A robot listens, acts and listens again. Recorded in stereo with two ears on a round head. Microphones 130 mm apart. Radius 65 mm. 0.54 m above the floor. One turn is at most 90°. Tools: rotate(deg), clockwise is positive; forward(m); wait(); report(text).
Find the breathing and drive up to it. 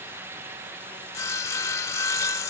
wait()
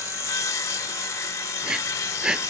rotate(30)
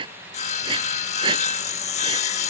rotate(90)
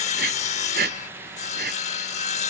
rotate(75)
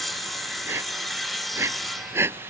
rotate(20)
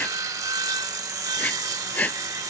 rotate(-10)
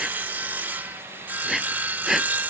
forward(1.0)
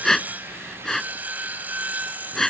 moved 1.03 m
forward(1.0)
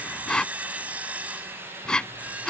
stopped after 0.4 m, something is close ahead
report("I am next to the breathing.")